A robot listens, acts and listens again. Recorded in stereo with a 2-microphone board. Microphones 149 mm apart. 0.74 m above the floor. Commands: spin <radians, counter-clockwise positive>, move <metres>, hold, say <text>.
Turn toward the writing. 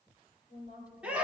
hold
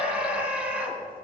hold
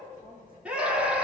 say I can't make out writing to turn to.